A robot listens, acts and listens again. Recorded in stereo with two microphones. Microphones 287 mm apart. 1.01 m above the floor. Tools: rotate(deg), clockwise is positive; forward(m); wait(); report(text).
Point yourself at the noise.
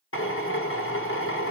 rotate(-45)
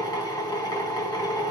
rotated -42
rotate(-15)
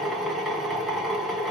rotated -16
report("Facing the drill, 1 to 2 m away.")